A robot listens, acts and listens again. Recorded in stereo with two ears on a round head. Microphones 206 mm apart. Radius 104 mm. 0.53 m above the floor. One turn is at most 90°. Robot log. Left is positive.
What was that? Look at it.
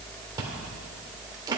note: The chewing: about 15° right or 165° right.
cmd yaw -15
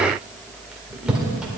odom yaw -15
end: Facing the chewing.